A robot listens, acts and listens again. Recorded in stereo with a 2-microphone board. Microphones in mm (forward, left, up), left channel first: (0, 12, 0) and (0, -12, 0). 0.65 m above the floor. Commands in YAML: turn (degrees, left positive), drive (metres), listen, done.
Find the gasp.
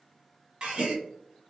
turn: -35
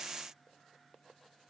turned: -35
listen: true
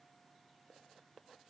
done: "I heard a gasp, but can't make it out now. It was about straight ahead or 110° right."